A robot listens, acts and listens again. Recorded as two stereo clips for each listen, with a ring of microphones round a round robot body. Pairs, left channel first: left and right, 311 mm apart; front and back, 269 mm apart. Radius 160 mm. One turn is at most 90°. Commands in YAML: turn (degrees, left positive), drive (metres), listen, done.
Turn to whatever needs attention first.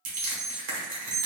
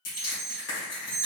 turn: -90
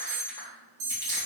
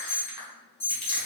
turn: -75
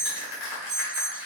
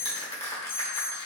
turn: -15
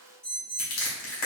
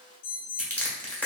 done: "Facing the alarm, 1 to 2 m away."